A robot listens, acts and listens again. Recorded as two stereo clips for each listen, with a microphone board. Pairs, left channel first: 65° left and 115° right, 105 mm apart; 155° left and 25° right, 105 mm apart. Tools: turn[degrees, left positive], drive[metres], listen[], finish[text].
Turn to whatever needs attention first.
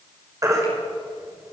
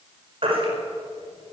Thought: The baby crying: 55° right.
Action: turn[-55]
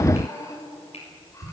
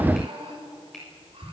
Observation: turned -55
Action: listen[]
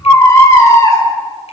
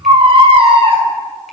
Action: finish[Found it: a baby crying, straight ahead.]